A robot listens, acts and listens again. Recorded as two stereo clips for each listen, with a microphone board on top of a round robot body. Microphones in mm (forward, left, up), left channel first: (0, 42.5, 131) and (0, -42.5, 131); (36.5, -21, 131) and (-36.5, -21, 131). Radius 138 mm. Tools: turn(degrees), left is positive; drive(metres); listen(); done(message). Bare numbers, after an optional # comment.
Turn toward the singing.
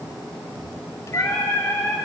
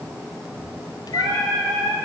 # The singing: 155° left.
turn(155)
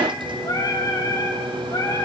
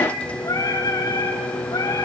# The singing is now 35° left.
turn(35)
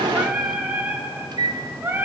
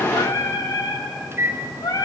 # The singing is now 25° right.
turn(-25)
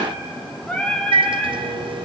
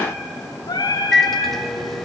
# The singing is now 10° left.
turn(10)
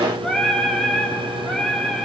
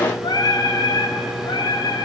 done("Found it: singing, straight ahead.")